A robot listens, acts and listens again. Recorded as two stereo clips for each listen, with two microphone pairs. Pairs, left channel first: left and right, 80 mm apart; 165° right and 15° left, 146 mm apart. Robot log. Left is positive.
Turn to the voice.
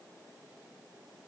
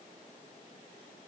cmd idle
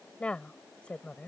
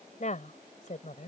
note: The woman speaking: 165° left.
cmd yaw +165
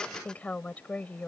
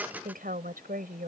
note: The woman speaking is now 15° left.
cmd yaw +15
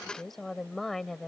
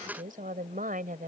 end: Facing the woman speaking.